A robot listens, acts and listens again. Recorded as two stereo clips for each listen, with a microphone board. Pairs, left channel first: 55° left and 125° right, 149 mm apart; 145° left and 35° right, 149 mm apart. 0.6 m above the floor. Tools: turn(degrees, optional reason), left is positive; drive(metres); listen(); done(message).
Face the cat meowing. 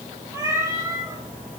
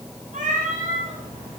turn(degrees=-55, reason="The cat meowing: 55° right.")
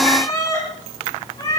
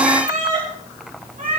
done("Found it: a cat meowing, straight ahead, over 4 m away.")